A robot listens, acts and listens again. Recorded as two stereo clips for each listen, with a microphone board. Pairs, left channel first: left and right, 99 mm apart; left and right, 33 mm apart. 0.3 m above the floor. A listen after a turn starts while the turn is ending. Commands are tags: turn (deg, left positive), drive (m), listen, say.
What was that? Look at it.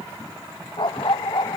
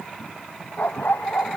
<turn deg="55"/>
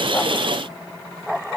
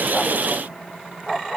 <say>Facing the dog barking.</say>